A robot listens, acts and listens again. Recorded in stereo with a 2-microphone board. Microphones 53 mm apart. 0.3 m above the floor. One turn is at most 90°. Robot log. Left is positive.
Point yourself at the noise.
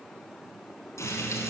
note: The frying: about 70° left or 110° left.
cmd yaw +70
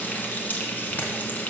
note: So it is at 35° left.
cmd yaw +35
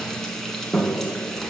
end: Facing the frying.